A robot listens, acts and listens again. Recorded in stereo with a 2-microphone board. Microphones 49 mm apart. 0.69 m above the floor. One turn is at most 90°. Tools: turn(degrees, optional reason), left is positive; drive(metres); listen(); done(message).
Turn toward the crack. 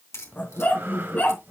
turn(degrees=70, reason="The crack: about 70° left or 110° left.")
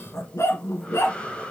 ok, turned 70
listen()
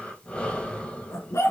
done("I heard a crack, but can't make it out now. It was about straight ahead or 40° left.")